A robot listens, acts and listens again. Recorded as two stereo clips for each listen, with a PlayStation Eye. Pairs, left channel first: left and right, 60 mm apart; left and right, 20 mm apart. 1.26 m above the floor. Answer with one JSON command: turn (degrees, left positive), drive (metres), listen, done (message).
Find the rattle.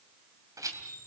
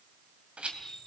{"turn": -70}
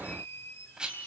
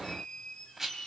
{"turn": -15}
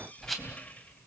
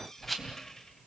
{"done": "Facing the rattle, 2 to 4 m away."}